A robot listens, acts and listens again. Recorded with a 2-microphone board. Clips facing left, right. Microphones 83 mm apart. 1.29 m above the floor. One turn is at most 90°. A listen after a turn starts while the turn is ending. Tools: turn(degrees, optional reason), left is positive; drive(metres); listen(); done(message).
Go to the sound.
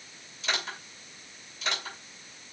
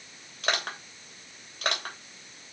turn(degrees=-65, reason="The crushing: about 65° right or 115° right.")
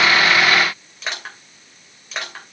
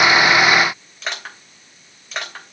drive(metres=1.0)
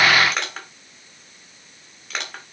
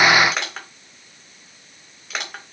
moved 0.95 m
drive(metres=1.0)
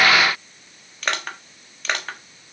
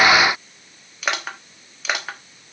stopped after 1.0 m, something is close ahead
done("Arrived at the crushing, straight ahead.")